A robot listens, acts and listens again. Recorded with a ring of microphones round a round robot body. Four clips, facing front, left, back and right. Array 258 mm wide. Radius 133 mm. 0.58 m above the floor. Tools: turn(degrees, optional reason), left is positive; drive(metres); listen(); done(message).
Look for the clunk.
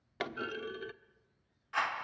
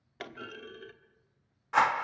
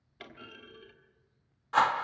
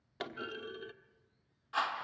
done("Found it: a clunk, straight ahead, 1 to 2 m away.")